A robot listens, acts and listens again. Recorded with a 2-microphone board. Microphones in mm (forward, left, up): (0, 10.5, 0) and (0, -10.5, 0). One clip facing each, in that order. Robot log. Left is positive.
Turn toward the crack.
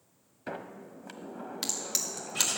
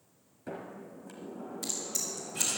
note: The crack: about 65° left or 115° left.
cmd yaw +65
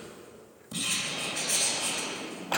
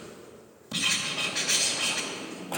cmd idle
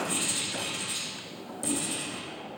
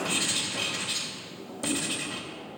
end: I heard a crack, but can't make it out now. It was about straight ahead or 50° left.